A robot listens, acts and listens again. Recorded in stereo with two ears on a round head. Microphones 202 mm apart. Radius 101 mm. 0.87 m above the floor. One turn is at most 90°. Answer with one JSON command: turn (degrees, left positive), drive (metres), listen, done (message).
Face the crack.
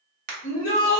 {"turn": -40}
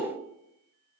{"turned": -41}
{"listen": true}
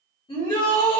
{"done": "I heard a crack, but can't make it out now. It was about straight ahead or 100° right."}